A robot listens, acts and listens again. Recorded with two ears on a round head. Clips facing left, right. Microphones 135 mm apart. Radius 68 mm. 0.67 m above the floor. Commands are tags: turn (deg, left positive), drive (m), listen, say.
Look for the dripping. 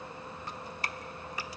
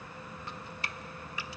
<turn deg="35"/>
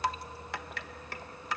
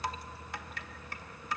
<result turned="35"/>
<turn deg="105"/>
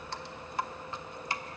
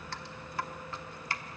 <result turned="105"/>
<turn deg="20"/>
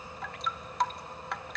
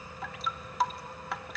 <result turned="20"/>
<say>Facing the dripping, under 1 m away.</say>